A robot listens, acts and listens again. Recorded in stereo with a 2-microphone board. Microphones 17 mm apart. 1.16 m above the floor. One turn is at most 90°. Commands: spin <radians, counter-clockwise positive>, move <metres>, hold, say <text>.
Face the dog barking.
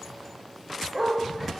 spin -0.52
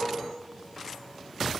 hold
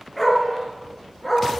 spin 0.26
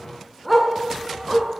say Found it: a dog barking, straight ahead.